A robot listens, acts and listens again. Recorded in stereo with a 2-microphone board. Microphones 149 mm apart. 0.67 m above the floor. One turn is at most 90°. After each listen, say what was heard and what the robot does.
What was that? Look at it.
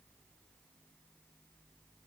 Keep listening.
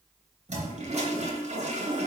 The toilet flushing: about 45° right or 135° right. Turn 45° right.
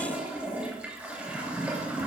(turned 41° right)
Found it: a toilet flushing, straight ahead, 2 to 4 m away.